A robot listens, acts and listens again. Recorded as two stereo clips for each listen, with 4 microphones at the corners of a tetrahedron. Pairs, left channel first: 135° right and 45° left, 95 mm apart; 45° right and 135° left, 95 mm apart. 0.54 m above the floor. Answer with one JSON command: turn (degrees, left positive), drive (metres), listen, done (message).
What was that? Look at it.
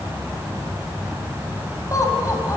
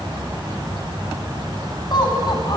{"turn": -80}
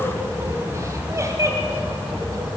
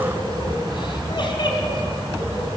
{"turn": -10}
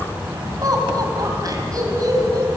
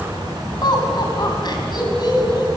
{"done": "Facing the laughter."}